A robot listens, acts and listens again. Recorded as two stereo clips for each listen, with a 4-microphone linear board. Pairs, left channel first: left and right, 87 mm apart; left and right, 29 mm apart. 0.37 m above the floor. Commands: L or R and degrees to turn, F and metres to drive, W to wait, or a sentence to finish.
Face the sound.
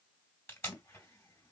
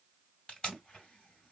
L25
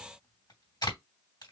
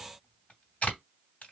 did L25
L120
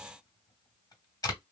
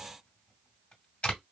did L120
L55
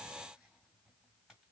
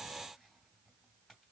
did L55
W
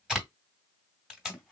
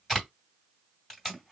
Facing the tape being pulled, 2 to 4 m away.